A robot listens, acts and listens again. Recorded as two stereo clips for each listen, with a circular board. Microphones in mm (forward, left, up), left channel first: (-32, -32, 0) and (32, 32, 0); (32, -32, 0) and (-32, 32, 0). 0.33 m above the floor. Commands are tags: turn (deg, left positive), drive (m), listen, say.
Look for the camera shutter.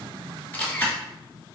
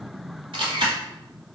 <turn deg="155"/>
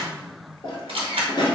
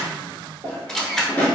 <turn deg="40"/>
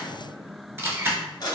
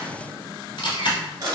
<turn deg="-20"/>
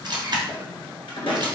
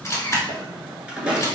<say>Facing the camera shutter, under 1 m away.</say>